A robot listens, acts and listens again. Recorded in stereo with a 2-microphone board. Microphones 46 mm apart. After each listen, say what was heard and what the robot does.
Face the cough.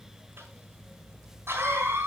The cough: about 60° right or 120° right. Turn 60° right.
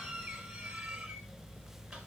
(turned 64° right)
So it is at 10° right. Turn 10° right.
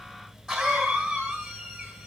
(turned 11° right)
Facing the cough.